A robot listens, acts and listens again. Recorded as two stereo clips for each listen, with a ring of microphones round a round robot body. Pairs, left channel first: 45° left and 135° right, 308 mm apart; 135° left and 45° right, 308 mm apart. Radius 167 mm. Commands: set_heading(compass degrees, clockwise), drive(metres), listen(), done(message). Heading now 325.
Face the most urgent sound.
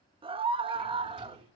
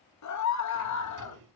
set_heading(170)
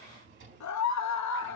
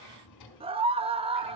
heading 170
set_heading(145)
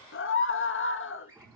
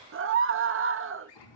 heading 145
done("Facing the scream, 1 to 2 m away.")